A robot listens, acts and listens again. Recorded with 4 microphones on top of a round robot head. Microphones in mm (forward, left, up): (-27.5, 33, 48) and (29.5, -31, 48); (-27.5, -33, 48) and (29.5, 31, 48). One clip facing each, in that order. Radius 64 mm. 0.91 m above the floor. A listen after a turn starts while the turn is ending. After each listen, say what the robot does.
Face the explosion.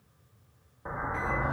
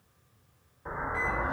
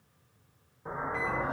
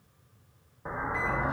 Turn 80° left.
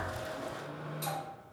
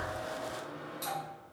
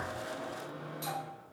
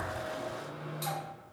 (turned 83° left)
Facing where the explosion came from. I can't hear it now.